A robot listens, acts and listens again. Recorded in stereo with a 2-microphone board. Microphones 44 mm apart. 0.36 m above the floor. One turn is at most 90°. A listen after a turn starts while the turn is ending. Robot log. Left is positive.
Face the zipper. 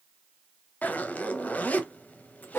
note: The zipper: about 40° left or 140° left.
cmd yaw +40
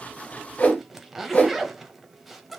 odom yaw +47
end: Found it: a zipper, straight ahead, under 1 m away.